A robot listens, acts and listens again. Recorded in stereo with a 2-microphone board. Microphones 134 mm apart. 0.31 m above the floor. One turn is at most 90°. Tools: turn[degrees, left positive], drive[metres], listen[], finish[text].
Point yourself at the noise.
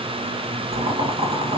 Thought: The boiling: about 60° right or 120° right.
Action: turn[-60]
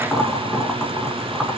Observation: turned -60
Action: finish[Found it: boiling, straight ahead.]